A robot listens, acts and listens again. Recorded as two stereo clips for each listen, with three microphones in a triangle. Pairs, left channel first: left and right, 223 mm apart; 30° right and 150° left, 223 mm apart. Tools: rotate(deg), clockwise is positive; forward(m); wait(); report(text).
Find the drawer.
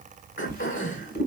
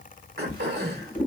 rotate(-40)
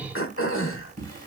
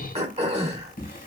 rotate(-20)
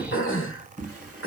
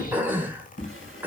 report("Facing the drawer.")